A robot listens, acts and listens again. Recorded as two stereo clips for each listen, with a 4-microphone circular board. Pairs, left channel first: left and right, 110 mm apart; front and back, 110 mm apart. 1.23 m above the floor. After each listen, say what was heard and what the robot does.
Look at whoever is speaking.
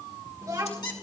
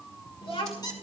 The child speaking: 35° right. Turn 35° right.
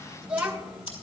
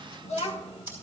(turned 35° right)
The child speaking is now 10° right. Turn 10° right.
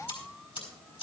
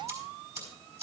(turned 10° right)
Keep listening.
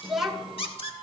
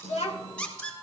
Found it: a child speaking, straight ahead.